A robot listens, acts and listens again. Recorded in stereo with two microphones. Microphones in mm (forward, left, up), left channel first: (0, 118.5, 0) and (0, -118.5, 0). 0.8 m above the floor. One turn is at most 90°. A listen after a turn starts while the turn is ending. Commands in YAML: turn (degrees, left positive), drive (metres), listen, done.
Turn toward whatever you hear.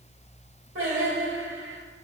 turn: -60
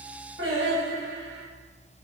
turn: -55
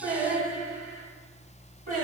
turn: -35
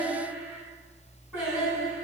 turn: -10
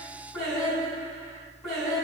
done: "Found it: singing, straight ahead."